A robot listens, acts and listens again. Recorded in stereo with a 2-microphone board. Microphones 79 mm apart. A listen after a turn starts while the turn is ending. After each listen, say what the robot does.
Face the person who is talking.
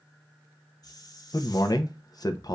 Turn 55° left.
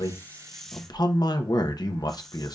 Turn 65° left.
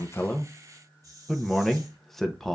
Found it: a man speaking, straight ahead.